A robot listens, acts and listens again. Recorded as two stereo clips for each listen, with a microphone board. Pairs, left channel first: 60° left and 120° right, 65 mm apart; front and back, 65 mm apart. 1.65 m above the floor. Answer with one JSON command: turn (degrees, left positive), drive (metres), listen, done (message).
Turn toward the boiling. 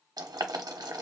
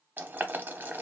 {"turn": -120}
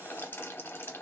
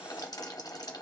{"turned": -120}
{"done": "Facing the boiling."}